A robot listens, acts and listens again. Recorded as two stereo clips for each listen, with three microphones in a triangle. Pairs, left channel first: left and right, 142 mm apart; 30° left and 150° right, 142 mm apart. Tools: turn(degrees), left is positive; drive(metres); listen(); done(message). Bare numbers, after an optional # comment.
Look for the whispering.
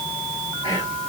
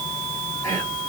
# The whispering: 35° right.
turn(-35)
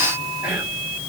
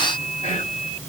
# The whispering is now 10° right.
turn(-10)
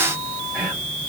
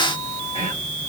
done("Found it: whispering, straight ahead.")